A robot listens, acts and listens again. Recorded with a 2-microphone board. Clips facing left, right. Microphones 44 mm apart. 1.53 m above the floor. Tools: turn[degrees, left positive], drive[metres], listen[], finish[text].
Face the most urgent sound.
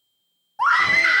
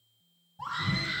Thought: The scream: about 65° left or 115° left.
Action: turn[65]
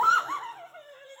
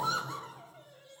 Thought: So it is at 40° left.
Action: turn[40]
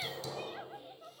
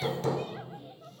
Action: listen[]
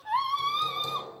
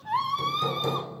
Action: finish[Found it: a scream, straight ahead.]